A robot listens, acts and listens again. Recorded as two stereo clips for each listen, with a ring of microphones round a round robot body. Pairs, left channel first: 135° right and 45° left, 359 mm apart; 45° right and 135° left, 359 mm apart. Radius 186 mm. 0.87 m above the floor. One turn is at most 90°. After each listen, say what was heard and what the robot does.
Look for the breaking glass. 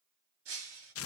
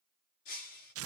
The breaking glass: 10° right. Turn 10° right.
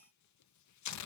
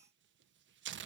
I heard breaking glass from this way, but can't make it out now.